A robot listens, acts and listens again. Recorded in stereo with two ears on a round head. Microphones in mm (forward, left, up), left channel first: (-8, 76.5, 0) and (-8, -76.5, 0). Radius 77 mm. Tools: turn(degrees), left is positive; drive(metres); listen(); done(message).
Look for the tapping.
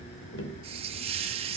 turn(degrees=70)
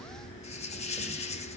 listen()
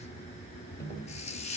turn(degrees=20)
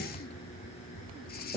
done("Found it: tapping, straight ahead, 2 to 4 m away.")